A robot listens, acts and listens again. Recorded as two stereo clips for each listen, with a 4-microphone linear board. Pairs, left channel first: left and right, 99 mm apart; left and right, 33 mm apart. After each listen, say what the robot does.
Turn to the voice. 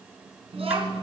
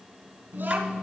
Turn 90° right.
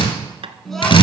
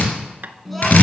Found it: a child speaking, straight ahead.